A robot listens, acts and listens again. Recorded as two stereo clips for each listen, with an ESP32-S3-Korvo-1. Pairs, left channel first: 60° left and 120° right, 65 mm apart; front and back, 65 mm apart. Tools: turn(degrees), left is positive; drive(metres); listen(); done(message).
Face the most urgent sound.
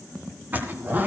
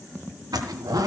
listen()
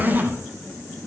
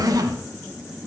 listen()
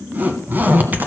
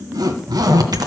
done("I can't make out anything urgent to turn to.")